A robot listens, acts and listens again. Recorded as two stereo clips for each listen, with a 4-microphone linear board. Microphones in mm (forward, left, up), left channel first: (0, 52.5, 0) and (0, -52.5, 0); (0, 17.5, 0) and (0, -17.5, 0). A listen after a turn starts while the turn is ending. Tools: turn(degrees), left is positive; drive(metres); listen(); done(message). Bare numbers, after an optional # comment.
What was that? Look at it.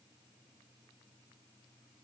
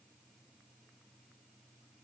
listen()
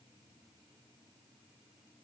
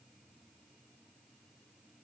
listen()
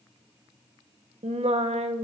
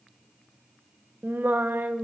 turn(-90)
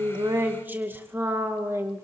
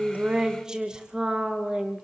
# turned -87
# So it is at 20° right.
turn(-20)
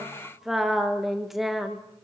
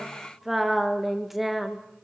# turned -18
done("Found it: singing, straight ahead, 2 to 4 m away.")